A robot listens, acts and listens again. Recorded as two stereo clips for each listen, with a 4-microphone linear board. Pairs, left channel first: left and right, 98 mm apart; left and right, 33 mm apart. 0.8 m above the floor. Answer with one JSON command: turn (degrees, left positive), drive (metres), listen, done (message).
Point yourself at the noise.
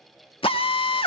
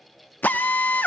{"turn": 70}
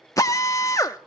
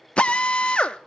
{"turn": 35}
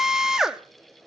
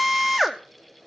{"done": "Found it: a drill, straight ahead."}